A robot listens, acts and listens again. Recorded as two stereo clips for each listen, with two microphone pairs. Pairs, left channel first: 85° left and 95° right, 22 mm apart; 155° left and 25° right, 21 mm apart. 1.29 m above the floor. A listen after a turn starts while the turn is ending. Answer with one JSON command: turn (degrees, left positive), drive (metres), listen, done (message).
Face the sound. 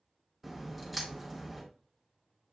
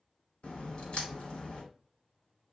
{"turn": 165}
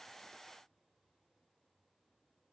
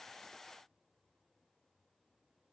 {"done": "Facing where the crack came from. I can't hear it now."}